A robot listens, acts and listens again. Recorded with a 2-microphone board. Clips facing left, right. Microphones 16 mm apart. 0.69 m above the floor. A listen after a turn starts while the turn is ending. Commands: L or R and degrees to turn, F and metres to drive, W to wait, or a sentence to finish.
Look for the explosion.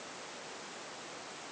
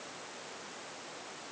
W
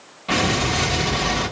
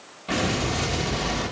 L20
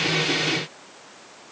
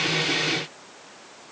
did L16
W
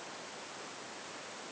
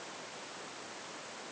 I heard an explosion, but can't make it out now. It was about straight ahead or 145° left.